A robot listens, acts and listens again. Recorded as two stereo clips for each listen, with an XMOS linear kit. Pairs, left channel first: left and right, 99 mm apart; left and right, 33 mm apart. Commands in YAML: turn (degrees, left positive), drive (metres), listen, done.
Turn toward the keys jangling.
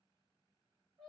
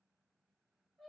listen: true
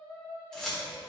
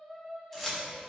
turn: 30
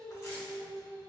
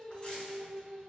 listen: true
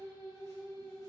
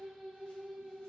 listen: true
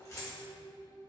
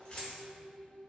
turn: 145
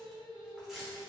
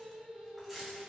done: "Found it: keys jangling, straight ahead."